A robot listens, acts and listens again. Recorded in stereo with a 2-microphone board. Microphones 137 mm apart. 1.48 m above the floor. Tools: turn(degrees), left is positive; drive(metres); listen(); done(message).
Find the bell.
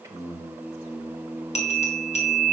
turn(degrees=55)
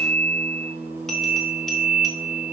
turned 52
done("Found it: a bell, straight ahead, 1 to 2 m away.")